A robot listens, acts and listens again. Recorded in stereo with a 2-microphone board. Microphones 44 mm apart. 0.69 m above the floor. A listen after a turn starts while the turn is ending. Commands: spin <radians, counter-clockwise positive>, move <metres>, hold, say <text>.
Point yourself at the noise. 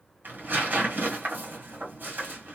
spin -0.87
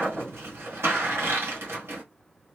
spin -1.40
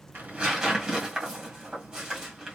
spin -0.26
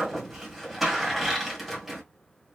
say Facing the tearing paper, 1 to 2 m away.